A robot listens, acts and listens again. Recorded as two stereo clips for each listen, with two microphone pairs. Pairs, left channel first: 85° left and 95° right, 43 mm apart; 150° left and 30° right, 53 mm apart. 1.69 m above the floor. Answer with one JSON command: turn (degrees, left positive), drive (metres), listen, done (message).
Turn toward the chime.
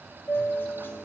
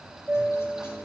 {"turn": 50}
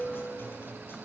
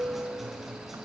{"turn": -10}
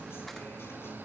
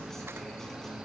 {"listen": true}
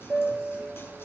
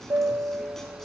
{"done": "Found it: a chime, straight ahead, 1 to 2 m away."}